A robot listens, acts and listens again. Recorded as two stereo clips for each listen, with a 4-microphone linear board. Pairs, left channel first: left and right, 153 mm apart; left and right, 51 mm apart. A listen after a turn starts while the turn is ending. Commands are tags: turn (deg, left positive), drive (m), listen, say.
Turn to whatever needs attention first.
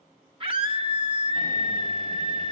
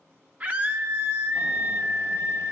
<turn deg="-35"/>
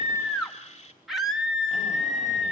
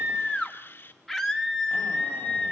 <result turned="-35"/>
<say>Found it: a scream, straight ahead, 2 to 4 m away.</say>